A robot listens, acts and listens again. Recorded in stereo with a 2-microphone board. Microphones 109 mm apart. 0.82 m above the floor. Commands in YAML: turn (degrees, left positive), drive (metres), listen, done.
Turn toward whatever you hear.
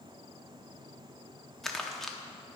turn: 30
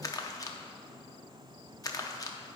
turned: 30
turn: 145
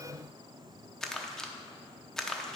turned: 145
done: "Found it: crumpling, straight ahead, under 1 m away."